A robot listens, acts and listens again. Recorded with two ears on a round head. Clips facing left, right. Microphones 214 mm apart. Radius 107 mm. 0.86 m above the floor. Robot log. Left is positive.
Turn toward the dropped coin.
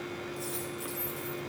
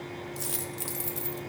note: The dropped coin: about 35° right or 145° right.
cmd yaw -35
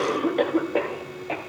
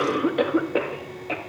cmd idle
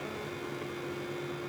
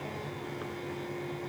end: I heard a dropped coin, but can't make it out now. It was about straight ahead or 110° right.